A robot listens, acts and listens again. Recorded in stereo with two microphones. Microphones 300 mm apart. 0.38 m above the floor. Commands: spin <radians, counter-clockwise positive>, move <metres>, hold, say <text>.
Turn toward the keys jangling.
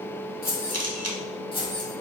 spin 0.52
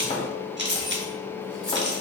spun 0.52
spin -0.70
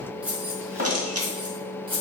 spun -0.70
spin -0.35
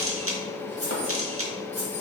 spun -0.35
spin -0.17
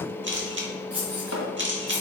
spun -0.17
say Facing the keys jangling, 2 to 4 m away.